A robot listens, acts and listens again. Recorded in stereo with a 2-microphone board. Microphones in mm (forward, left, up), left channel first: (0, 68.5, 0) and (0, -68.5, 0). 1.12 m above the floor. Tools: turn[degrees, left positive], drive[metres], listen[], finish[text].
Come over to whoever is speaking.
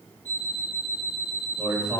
Action: turn[-30]
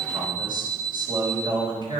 Thought: So it is at 145° right.
Action: turn[-145]
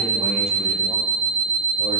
Action: listen[]
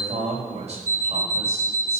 Thought: The man speaking is now 50° right.
Action: turn[-50]
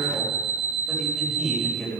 Action: drive[1.0]
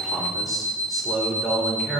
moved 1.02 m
Action: drive[1.0]
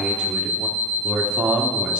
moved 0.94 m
Action: drive[1.0]
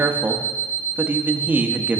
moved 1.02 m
Thought: The man speaking is now 15° right.
Action: turn[-15]
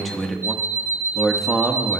Action: drive[1.0]
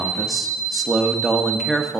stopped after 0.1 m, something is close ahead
Action: finish[I am next to the man speaking.]